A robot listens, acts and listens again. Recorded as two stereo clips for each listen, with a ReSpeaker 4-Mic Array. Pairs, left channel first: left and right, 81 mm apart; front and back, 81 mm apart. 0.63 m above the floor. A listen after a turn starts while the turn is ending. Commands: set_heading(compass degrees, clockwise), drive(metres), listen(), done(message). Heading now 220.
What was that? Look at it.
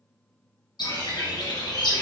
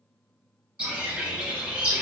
set_heading(110)
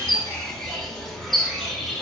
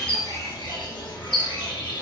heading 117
done("Found it: a bird, straight ahead, 1 to 2 m away.")